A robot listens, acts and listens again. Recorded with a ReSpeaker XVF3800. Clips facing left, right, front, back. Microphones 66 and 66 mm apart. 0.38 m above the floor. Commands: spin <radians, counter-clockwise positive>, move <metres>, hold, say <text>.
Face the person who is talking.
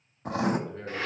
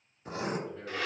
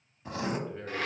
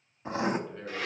spin 1.22
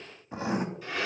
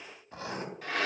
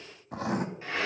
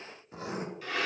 hold
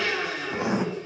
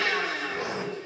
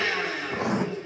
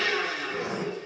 hold
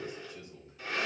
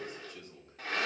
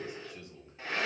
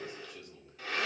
spin -1.13
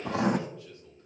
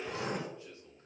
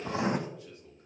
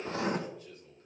spin -0.35
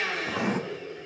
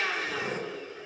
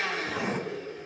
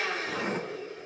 hold
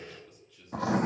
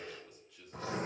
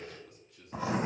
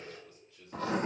spin -0.17
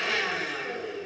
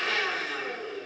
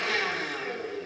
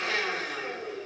hold
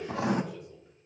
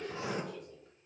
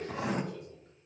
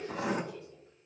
hold
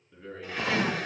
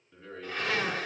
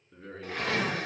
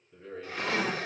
say Facing the man speaking, over 4 m away.